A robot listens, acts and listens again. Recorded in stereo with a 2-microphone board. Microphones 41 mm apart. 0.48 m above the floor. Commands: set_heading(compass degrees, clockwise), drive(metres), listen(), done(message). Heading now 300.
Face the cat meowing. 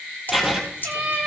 set_heading(30)
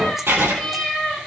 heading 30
done("Facing the cat meowing.")